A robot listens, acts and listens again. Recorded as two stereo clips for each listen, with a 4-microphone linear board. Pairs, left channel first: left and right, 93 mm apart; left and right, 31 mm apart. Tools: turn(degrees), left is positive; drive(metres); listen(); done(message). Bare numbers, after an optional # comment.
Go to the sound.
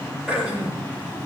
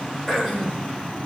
turn(-30)
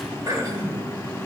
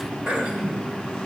# So it is at 140° right.
turn(-140)
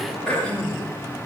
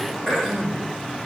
# The throat clearing is now 15° left.
turn(15)
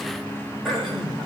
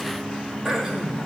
drive(1.0)
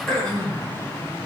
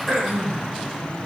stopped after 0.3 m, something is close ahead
# The throat clearing is now 10° left.
turn(10)
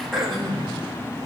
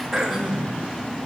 done("Something is in my way. I am facing the throat clearing but have not reached it.")